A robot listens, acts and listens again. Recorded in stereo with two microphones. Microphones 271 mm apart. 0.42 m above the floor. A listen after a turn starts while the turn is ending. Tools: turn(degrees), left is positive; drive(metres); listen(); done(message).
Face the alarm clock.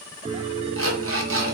turn(degrees=-55)
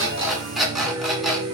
done("Found it: an alarm clock, straight ahead.")